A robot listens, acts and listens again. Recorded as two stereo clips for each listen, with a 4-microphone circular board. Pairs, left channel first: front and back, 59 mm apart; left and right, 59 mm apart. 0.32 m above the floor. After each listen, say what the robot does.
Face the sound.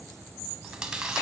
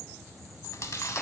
Turn 105° left.
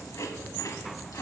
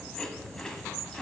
Turn 10° left.
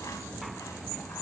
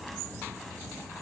Keep listening.
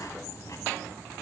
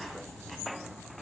Facing the chewing, under 1 m away.